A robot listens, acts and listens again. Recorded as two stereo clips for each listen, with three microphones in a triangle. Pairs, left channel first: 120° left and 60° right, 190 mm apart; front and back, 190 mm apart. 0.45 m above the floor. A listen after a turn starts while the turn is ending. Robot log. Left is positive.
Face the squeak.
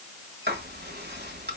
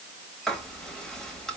cmd idle
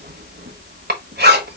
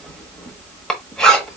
cmd idle
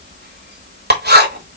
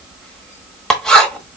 end: I can't make out a squeak, only writing.